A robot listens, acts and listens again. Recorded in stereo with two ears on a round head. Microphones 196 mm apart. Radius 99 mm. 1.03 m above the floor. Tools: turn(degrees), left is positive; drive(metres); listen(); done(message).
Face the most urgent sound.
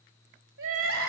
turn(degrees=-55)
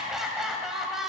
done("Facing the crying.")